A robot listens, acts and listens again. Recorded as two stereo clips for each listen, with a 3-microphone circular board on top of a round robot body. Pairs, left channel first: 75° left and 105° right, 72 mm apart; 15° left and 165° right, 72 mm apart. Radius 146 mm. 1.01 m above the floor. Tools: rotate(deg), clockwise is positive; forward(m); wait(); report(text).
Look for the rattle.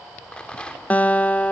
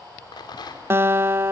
report("Facing the rattle.")